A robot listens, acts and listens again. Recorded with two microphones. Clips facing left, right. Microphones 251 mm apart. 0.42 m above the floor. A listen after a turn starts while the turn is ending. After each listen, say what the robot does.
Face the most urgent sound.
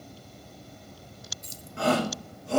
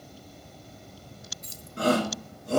Turn 40° right.
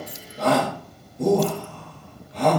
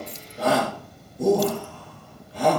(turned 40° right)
Found it: a shout, straight ahead.